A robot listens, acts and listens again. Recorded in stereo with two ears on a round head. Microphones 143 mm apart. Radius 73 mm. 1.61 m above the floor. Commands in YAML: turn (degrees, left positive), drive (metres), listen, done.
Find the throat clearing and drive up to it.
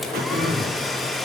turn: -60
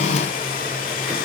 listen: true
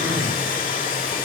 drive: 1.0
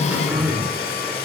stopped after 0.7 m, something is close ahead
turn: -10
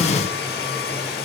listen: true
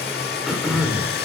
done: "Something is in my way. I am facing the throat clearing but have not reached it."